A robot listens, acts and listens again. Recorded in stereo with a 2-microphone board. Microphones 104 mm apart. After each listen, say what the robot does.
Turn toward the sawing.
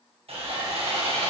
Turn 70° right.
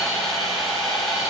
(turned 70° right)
Facing the sawing.